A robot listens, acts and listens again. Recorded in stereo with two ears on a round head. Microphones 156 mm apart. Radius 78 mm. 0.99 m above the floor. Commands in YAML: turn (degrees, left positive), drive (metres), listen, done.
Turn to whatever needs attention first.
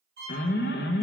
turn: 60
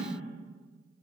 listen: true
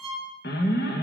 turn: 55
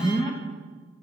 turn: 25
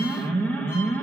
turn: 10
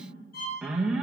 done: "Facing the alarm, under 1 m away."